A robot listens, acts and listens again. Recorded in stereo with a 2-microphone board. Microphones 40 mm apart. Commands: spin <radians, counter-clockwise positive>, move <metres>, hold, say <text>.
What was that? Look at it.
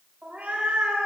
spin -0.44
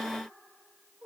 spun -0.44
spin -0.44
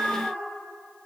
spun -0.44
spin -2.44
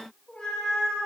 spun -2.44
spin 0.35
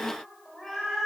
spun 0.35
say Facing the cat meowing, 2 to 4 m away.